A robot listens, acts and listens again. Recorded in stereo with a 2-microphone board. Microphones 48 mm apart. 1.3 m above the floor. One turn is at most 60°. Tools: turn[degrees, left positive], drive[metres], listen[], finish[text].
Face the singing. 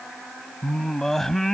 Action: turn[30]
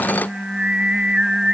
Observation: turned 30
Thought: So it is at 15° right.
Action: turn[-15]
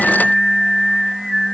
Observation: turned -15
Action: finish[Found it: singing, straight ahead.]